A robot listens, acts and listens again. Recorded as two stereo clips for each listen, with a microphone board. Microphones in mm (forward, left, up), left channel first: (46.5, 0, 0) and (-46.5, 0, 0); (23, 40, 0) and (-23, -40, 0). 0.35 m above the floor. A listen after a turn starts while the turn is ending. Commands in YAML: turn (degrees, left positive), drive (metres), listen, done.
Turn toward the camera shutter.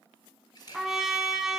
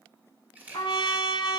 turn: -45
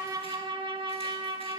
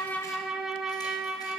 listen: true
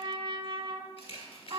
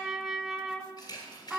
turn: 15
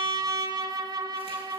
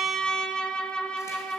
listen: true
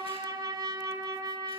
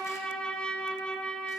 listen: true
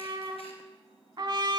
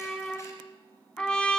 done: "Facing where the camera shutter came from. I can't hear it now."